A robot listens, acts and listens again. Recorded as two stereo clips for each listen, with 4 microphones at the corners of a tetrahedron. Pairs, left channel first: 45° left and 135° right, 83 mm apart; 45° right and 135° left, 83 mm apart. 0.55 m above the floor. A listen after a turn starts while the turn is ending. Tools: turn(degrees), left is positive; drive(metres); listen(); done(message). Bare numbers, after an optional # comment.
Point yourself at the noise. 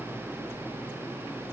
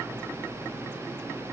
listen()
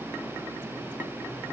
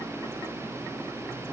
listen()
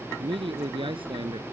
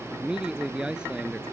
# The man speaking: 145° right.
turn(-145)
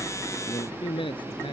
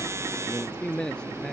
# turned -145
# The man speaking is now 35° left.
turn(35)
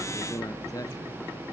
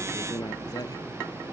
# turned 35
done("Facing the man speaking.")